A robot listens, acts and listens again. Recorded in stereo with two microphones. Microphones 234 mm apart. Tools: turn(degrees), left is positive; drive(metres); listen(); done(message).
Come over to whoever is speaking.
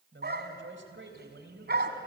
turn(degrees=-55)
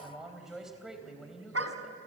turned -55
drive(metres=1.0)
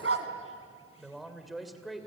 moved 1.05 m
drive(metres=1.0)
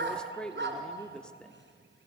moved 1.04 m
drive(metres=1.0)
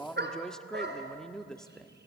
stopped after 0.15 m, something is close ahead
done("Arrived at the man speaking, straight ahead.")